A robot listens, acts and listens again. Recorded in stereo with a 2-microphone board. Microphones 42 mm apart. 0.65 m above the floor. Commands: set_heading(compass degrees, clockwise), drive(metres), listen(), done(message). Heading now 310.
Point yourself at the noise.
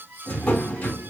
set_heading(270)
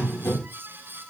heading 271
set_heading(171)
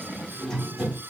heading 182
set_heading(172)
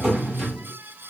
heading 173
done("Found it: a drawer, straight ahead.")